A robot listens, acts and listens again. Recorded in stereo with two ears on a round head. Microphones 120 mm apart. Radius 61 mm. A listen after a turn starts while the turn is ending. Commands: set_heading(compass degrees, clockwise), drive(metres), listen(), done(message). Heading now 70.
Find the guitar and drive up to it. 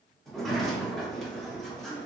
listen()
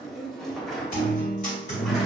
set_heading(10)
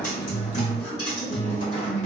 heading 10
set_heading(330)
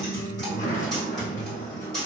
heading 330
drive(1.0)
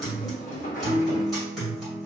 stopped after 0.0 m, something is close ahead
done("Something is in my way. I am facing the guitar but have not reached it.")